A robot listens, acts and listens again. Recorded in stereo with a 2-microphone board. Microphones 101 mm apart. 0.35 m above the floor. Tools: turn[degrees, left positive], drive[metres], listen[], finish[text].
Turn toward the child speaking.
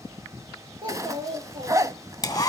Thought: The child speaking: about 55° right or 125° right.
Action: turn[-55]
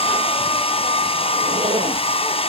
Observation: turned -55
Action: listen[]
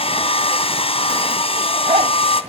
Action: listen[]
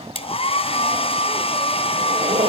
Action: finish[I heard a child speaking, but can't make it out now. It was about straight ahead or 70° right.]